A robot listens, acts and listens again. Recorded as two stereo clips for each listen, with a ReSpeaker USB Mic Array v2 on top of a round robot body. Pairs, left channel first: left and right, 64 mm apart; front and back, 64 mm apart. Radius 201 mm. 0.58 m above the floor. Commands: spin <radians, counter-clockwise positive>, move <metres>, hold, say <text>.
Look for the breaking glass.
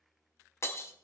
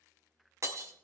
spin 2.36
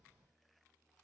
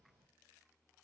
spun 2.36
say Facing where the breaking glass came from. I can't hear it now.